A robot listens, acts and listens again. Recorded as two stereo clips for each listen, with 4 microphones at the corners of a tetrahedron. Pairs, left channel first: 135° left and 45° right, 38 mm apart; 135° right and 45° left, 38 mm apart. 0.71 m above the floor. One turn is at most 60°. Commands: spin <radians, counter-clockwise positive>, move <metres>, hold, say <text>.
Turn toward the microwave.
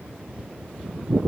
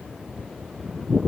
hold
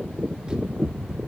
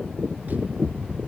hold
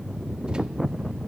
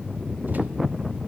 say I can't make out a microwave.